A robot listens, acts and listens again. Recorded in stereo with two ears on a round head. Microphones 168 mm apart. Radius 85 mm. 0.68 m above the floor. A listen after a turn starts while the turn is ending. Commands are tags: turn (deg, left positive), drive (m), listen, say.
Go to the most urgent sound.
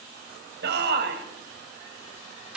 <turn deg="-65"/>
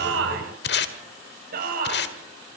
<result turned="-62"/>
<turn deg="-50"/>
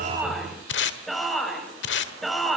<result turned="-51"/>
<drive m="1.0"/>
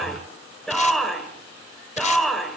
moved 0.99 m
<drive m="1.0"/>
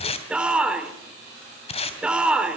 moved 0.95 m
<drive m="1.0"/>
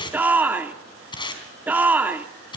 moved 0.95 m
<turn deg="-10"/>
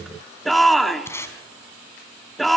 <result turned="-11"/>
<drive m="1.0"/>
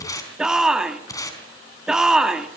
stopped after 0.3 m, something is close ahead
<say>Arrived at the shout, straight ahead.</say>